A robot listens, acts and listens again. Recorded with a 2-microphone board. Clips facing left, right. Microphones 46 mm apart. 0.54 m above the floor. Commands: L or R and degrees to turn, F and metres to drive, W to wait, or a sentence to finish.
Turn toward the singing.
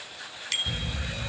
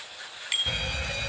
W
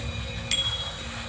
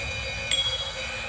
W
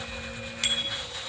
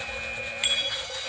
I can't make out singing, only a bicycle bell and an alarm.